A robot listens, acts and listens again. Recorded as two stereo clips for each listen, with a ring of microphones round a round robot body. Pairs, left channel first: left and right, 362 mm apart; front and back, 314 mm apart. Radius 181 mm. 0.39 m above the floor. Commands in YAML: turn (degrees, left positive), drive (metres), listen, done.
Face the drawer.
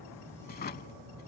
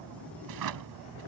turn: 155
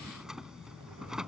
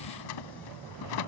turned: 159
done: "Found it: a drawer, straight ahead."